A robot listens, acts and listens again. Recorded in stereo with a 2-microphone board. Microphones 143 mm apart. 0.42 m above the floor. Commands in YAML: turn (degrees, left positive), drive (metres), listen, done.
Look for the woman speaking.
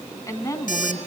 turn: 25
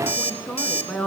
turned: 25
done: "Facing the woman speaking, 2 to 4 m away."